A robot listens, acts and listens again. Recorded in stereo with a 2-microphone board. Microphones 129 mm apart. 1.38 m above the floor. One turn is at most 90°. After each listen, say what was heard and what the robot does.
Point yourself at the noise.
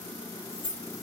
The keys jangling: about 45° left or 135° left. Turn 45° left.
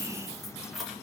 Facing the keys jangling.